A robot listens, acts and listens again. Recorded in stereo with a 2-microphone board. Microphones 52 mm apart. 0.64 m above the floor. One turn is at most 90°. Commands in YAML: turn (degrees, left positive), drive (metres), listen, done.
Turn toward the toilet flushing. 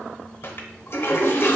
turn: 45
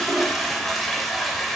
done: "Facing the toilet flushing, under 1 m away."